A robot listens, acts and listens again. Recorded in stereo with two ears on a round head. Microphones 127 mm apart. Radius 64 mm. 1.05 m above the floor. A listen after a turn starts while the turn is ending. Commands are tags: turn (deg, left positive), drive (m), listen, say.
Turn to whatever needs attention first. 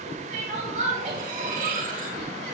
<turn deg="-55"/>
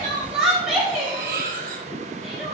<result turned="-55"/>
<say>Facing the crying.</say>